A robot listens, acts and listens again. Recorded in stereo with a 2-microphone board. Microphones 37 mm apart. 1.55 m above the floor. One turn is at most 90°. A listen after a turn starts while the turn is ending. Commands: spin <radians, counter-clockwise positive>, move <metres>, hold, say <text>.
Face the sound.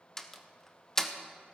spin 0.52
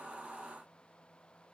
hold
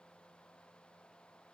say I heard a door slam, but can't make it out now. It was about 15° right or 135° left.